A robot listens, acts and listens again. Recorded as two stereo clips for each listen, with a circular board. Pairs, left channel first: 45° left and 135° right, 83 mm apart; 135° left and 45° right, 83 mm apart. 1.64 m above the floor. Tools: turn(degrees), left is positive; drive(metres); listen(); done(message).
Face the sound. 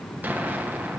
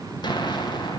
turn(degrees=155)
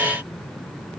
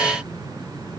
done("I heard an explosion from this way, but can't make it out now.")